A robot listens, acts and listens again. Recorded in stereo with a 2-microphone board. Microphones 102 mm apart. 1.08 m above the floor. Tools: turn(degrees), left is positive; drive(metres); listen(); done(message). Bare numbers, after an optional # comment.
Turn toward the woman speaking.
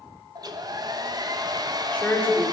turn(30)
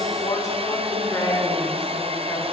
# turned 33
# So it is at 145° left.
turn(145)
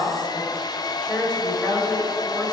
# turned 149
# The woman speaking is now 10° left.
turn(10)
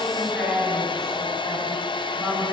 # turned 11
done("Facing the woman speaking, over 4 m away.")